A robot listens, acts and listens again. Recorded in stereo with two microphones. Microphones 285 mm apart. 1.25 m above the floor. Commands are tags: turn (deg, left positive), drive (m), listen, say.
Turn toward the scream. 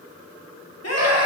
<turn deg="60"/>
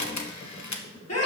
<turn deg="60"/>
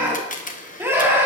<turn deg="-10"/>
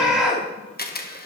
<say>Found it: a scream, straight ahead, 2 to 4 m away.</say>